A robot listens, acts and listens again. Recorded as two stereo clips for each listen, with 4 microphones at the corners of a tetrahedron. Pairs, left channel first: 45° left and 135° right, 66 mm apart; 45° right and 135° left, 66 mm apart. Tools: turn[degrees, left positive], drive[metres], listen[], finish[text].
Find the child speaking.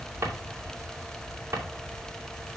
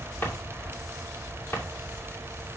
Action: listen[]
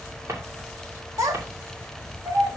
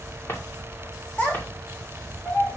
Thought: The child speaking: 105° right.
Action: turn[-105]
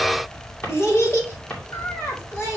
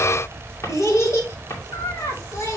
Action: finish[Facing the child speaking.]